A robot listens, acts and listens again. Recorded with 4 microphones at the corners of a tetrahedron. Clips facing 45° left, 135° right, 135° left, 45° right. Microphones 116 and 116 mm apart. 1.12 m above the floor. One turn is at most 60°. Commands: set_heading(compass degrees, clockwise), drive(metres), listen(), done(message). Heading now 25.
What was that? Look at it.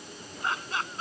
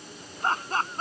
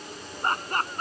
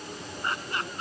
set_heading(325)
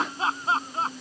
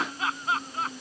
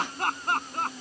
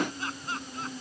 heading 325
set_heading(265)
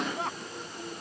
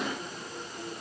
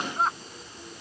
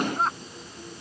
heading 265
set_heading(220)
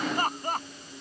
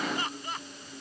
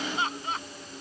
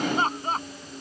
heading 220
done("Found it: laughter, straight ahead.")